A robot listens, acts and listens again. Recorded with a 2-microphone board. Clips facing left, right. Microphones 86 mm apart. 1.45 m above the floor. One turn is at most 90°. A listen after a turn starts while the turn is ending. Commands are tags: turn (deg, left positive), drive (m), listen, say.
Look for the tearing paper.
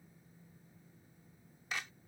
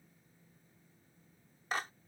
<listen/>
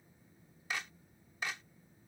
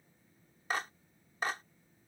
<listen/>
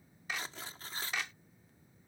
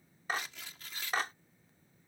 <turn deg="35"/>
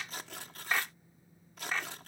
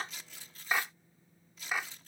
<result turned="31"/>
<turn deg="90"/>
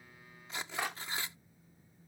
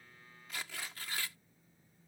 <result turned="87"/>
<turn deg="25"/>
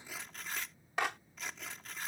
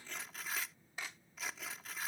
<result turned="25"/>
<say>Facing the tearing paper.</say>